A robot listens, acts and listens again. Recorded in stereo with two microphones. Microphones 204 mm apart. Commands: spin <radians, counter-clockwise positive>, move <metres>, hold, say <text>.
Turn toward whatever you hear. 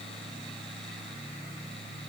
hold
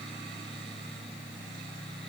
hold
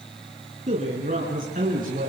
spin -0.79
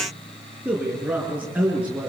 spin -0.17
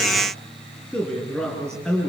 say Found it: a man speaking, straight ahead.